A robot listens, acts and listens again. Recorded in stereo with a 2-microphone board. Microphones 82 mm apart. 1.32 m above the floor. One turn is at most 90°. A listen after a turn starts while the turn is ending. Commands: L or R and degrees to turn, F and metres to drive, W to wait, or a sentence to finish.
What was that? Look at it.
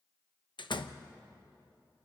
L70
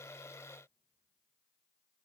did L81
W
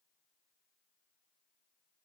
I heard a door slam, but can't make it out now. It was about 15° right or 30° left.